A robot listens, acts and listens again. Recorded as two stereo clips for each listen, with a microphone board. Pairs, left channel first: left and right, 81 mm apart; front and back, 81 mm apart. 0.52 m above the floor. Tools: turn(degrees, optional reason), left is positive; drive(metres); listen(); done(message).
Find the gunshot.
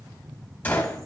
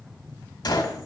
turn(degrees=25, reason="The gunshot: 25° left.")
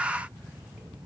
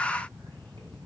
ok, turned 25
done("Facing where the gunshot came from. I can't hear it now.")